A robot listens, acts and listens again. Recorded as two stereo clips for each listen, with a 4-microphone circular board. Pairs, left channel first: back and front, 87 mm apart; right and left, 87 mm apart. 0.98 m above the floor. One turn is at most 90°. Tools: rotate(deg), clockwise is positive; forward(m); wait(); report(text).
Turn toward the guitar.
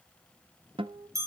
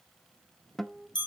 report("Facing the guitar, under 1 m away.")